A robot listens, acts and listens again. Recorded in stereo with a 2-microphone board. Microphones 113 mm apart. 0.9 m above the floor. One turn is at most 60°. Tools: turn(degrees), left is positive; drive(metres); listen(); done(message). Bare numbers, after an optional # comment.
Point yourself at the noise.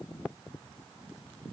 listen()
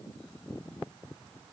listen()
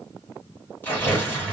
# The tearing paper: about 20° left or 160° left.
turn(20)
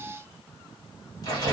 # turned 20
# So it is at 140° left.
turn(60)
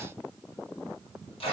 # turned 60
# The tearing paper is now 115° left.
turn(60)
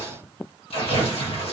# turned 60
# The tearing paper is now 70° left.
turn(60)
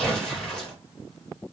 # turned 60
# The tearing paper is now 10° left.
turn(10)
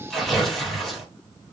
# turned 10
done("Facing the tearing paper.")